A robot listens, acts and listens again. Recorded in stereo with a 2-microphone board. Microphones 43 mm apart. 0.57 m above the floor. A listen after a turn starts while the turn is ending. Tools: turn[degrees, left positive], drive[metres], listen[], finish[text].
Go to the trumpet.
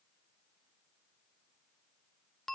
Action: listen[]
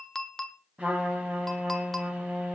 Thought: The trumpet: about 30° right or 150° right.
Action: turn[-30]
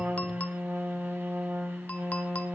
Thought: So it is at 115° right.
Action: turn[-115]
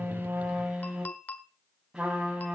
Thought: The trumpet is now 15° right.
Action: turn[-15]
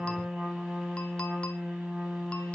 Action: drive[1.0]
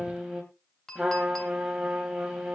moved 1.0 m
Action: drive[1.0]
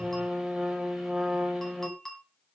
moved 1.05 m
Action: drive[1.0]
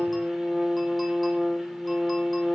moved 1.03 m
Action: drive[1.0]
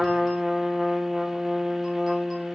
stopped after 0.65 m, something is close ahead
Thought: The trumpet is now 10° right.
Action: turn[-10]
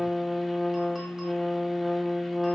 Action: finish[I am next to the trumpet.]